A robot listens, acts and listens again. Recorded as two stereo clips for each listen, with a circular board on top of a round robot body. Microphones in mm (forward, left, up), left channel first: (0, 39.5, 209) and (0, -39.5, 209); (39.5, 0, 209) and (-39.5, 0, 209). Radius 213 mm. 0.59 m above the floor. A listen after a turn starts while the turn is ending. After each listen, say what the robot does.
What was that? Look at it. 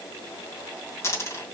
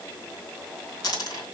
Turn 35° left.
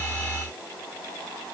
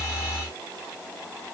I heard a dropped coin from this way, but can't make it out now.